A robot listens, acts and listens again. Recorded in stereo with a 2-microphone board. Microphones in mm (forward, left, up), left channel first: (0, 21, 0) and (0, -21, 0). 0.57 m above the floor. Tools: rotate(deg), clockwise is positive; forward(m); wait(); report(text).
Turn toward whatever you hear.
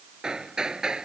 rotate(20)
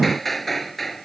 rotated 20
report("Found it: hammering, straight ahead.")